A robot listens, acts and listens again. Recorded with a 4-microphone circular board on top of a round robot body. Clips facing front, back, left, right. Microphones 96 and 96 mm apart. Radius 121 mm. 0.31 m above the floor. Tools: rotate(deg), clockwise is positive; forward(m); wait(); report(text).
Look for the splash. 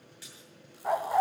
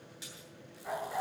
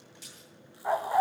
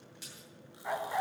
rotate(115)
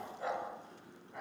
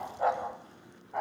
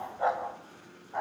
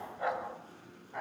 report("Facing where the splash came from. I can't hear it now.")